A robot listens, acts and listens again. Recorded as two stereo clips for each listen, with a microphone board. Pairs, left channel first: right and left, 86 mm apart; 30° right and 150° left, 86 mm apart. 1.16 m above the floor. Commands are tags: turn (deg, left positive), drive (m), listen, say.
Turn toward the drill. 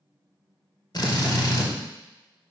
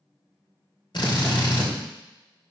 <turn deg="-55"/>
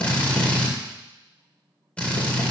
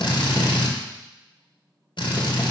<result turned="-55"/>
<turn deg="-15"/>
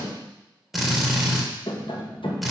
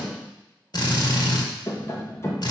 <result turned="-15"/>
<say>Facing the drill.</say>